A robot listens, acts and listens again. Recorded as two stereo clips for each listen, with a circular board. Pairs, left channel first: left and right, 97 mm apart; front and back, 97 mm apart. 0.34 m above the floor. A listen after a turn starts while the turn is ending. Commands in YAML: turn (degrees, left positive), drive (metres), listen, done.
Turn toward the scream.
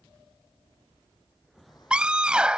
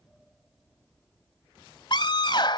turn: -15
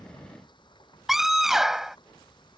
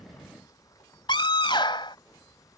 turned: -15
done: "Found it: a scream, straight ahead."